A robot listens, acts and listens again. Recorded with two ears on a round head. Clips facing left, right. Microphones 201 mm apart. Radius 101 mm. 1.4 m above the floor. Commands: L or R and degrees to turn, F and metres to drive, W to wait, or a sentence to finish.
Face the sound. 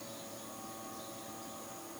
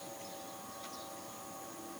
W
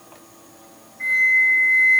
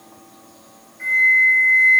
R15
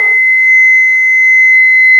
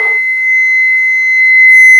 Facing the flute, 1 to 2 m away.